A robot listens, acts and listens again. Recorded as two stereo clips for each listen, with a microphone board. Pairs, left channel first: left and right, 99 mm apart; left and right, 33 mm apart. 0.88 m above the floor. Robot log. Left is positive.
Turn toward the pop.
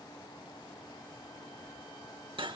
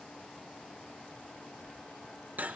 cmd idle
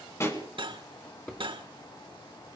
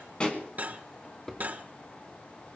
note: The pop: about 30° left or 150° left.
cmd yaw +30
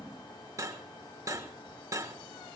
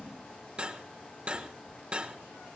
cmd idle
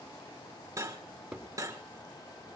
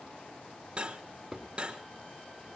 end: I heard a pop, but can't make it out now. It was about straight ahead or 120° left.